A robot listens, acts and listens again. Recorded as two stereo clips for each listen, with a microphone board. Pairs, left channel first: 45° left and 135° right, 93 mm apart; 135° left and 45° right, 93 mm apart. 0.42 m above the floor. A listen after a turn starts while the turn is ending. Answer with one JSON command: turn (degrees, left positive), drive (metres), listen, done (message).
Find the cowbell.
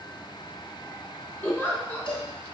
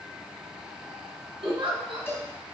{"turn": 70}
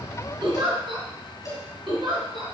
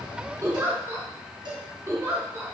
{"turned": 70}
{"turn": -10}
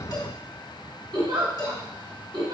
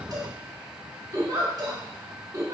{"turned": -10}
{"done": "Found it: a cowbell, straight ahead."}